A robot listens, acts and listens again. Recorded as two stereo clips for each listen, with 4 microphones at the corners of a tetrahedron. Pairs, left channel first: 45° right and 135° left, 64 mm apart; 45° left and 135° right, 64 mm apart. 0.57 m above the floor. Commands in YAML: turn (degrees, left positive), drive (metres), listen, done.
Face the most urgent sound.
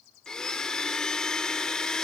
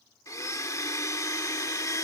listen: true
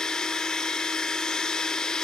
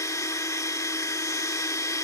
listen: true
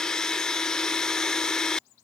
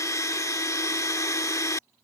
done: "I can't make out anything urgent to turn to."